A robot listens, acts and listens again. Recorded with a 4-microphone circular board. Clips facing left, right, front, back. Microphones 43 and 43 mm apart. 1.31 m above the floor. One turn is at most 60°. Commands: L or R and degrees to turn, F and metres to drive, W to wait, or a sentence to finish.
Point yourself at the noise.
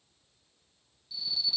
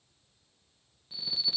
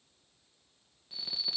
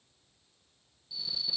R45
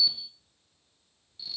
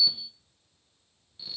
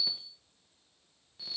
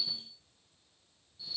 R20
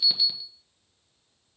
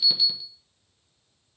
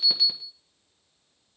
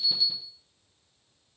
Found it: an alarm, straight ahead, 1 to 2 m away.